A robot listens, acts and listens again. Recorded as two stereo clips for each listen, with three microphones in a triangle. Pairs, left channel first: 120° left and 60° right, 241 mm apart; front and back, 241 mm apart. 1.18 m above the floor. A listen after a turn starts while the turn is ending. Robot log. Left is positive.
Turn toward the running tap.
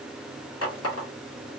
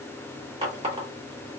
note: The running tap: 115° left.
cmd yaw +115
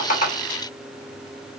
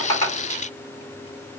cmd idle
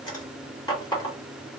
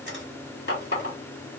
note: The running tap is now 45° left.
cmd yaw +45
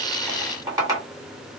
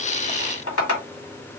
note: The running tap is now 15° left.
cmd yaw +15
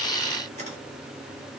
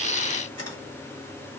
cmd idle
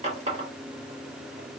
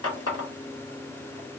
end: Found it: a running tap, straight ahead, 1 to 2 m away.